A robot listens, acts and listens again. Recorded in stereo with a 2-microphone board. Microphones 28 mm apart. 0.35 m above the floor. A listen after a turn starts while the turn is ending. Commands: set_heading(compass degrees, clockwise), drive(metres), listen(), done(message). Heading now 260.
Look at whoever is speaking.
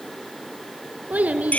set_heading(330)
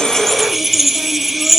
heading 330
listen()
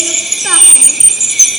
listen()
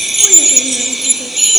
done("I heard a child speaking, but can't make it out now. It was about straight ahead or 40° right.")